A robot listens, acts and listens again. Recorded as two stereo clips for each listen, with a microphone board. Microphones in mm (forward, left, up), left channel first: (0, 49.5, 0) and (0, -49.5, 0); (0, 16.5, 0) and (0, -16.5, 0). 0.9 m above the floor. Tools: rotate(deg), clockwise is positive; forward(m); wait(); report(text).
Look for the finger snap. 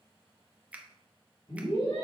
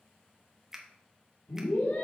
rotate(30)
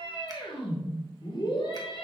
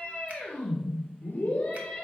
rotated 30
wait()
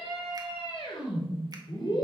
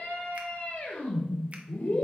wait()
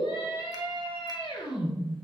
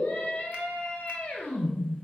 report("I heard a finger snap, but can't make it out now. It was about 15° left or 135° right.")